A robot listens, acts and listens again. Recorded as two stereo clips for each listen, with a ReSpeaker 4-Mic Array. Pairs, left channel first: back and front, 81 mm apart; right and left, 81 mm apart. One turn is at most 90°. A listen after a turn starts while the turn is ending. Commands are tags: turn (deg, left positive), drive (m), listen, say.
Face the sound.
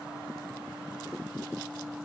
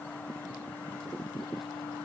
<listen/>
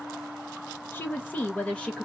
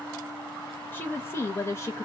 <turn deg="-90"/>
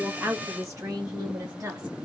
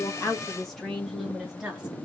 <turn deg="10"/>
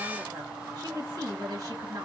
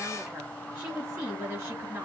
<turn deg="20"/>
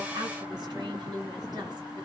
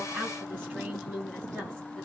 <say>Facing the woman speaking.</say>